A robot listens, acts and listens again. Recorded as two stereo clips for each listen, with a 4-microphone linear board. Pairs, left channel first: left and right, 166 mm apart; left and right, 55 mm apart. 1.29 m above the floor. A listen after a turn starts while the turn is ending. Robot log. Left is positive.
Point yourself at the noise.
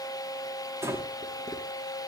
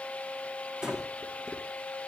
cmd yaw -30
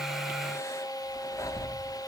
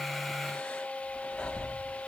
note: So it is at 20° left.
cmd yaw +20
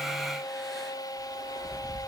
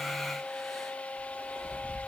end: Found it: breathing, straight ahead.